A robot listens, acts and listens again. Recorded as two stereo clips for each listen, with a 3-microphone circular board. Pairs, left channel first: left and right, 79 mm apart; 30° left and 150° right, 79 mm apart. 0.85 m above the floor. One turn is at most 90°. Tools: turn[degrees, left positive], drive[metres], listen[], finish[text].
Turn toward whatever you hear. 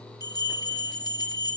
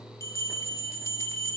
Thought: The bell: 75° left.
Action: turn[75]
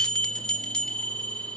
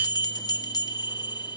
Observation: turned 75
Thought: The bell is now 15° left.
Action: turn[15]
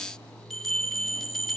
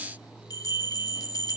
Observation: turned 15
Action: finish[Facing the bell.]